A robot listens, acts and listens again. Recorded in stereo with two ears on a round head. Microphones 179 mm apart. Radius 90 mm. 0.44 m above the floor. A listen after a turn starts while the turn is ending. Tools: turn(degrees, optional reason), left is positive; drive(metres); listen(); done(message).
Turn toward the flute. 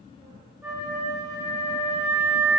turn(degrees=-30)
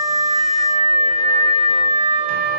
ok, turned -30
turn(degrees=-135, reason="So it is at 135° right.")
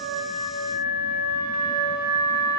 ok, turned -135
done("Found it: a flute, straight ahead, 2 to 4 m away.")